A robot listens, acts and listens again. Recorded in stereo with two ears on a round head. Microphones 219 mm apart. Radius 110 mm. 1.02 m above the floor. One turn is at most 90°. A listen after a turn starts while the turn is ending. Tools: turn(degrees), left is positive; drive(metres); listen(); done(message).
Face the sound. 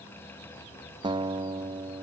turn(degrees=-20)
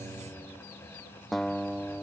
done("Facing the guitar.")